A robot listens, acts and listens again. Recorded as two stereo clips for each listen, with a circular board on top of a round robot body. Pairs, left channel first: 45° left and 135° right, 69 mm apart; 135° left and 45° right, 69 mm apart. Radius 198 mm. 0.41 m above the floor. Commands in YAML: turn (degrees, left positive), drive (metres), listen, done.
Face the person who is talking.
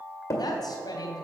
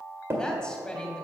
turn: 60
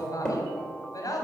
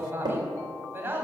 turn: 15
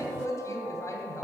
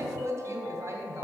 done: "Facing the woman speaking."